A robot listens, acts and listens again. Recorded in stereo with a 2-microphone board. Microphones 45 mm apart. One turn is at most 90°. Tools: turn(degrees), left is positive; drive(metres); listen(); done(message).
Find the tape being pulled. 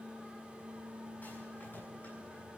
listen()
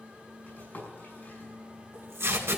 turn(degrees=-75)
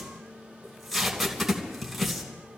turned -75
done("Facing the tape being pulled.")